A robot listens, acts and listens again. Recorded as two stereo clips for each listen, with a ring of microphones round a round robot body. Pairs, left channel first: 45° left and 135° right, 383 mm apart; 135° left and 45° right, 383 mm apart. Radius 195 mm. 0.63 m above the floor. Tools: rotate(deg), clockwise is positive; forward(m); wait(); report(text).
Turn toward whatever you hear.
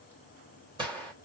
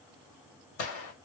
rotate(-145)
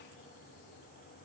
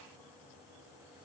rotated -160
rotate(15)
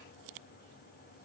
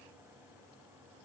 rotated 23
rotate(-10)
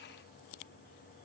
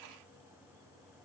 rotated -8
report("I heard a gunshot from this way, but can't make it out now.")